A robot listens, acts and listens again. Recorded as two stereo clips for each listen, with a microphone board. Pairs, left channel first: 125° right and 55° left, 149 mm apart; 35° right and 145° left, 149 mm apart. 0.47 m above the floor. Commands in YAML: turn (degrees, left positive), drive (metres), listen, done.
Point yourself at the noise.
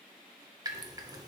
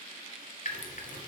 done: "Facing the dripping, 1 to 2 m away."